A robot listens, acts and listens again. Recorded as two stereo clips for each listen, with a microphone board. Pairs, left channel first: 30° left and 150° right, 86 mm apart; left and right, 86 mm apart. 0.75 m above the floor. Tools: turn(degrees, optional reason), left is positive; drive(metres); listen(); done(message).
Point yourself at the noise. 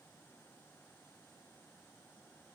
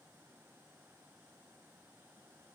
listen()
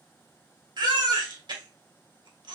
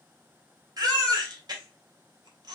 turn(degrees=-125, reason="The baby crying: 125° right.")
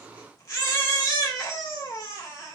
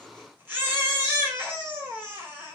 turn(degrees=-20, reason="The baby crying is now 20° right.")
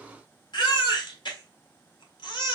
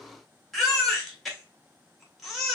done("Found it: a baby crying, straight ahead.")